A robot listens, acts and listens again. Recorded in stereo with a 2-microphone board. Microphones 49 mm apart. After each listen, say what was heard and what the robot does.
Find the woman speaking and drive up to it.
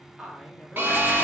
Turn 30° right.
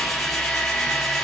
Keep listening.
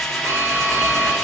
Keep listening.
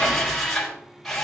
I heard a woman speaking, but can't make it out now. It was about 25° left or 145° right. I did not reach it.